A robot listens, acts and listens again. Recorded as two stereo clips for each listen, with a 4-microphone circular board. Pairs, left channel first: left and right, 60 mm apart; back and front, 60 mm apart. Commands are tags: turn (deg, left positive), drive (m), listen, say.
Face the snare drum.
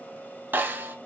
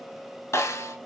<turn deg="-145"/>
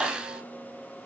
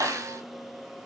<turn deg="-15"/>
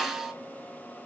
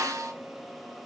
<say>Found it: a snare drum, straight ahead.</say>